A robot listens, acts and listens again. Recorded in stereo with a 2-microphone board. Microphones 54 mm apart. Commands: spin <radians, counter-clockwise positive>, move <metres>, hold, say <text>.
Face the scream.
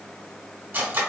hold
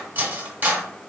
hold
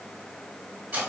say I can't make out a scream, only cutlery clinking.